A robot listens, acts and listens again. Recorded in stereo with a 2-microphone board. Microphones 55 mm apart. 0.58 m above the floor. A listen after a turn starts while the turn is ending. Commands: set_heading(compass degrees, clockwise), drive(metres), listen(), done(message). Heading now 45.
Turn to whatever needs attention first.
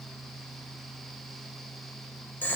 listen()
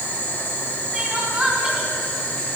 set_heading(60)
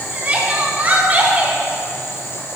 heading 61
set_heading(211)
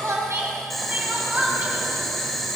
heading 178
set_heading(208)
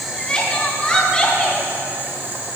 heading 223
set_heading(208)
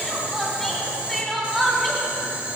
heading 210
done("Found it: crying, straight ahead.")